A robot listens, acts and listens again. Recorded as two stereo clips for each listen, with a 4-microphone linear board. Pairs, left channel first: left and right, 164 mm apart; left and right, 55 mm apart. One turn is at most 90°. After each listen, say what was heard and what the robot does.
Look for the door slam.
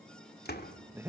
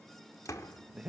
Turn 90° left.
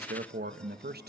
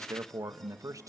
I heard a door slam from this way, but can't make it out now.